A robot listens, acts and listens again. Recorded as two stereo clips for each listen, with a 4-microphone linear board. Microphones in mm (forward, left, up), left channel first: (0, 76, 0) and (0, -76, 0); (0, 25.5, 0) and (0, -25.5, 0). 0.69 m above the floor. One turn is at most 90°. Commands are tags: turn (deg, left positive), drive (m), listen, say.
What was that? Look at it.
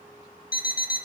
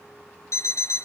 <turn deg="75"/>
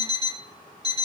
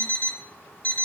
<turn deg="30"/>
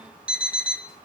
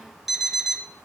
<say>Found it: an alarm clock, straight ahead, 1 to 2 m away.</say>